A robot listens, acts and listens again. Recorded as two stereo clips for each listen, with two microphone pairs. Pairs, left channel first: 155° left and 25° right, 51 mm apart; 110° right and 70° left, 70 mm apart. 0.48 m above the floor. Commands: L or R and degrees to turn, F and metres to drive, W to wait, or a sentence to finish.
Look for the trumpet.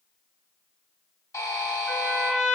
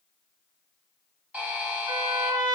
L80
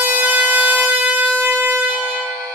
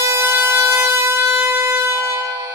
L30
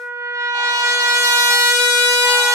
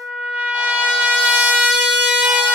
Found it: a trumpet, straight ahead, under 1 m away.